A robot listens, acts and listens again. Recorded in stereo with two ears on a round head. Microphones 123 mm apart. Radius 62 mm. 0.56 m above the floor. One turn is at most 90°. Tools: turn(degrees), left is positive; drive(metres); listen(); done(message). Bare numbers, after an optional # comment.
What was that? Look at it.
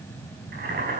# The boiling: about 70° right or 110° right.
turn(-70)
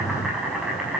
done("Facing the boiling.")